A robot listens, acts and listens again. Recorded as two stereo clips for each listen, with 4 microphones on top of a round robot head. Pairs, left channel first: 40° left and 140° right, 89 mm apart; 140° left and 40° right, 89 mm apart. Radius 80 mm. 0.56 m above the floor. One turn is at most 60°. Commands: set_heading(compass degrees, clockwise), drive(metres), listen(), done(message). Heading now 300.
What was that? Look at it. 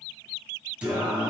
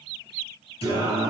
set_heading(240)
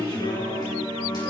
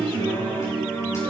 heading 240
set_heading(180)
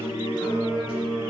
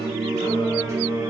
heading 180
set_heading(165)
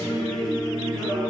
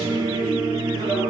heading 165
done("Facing the singing.")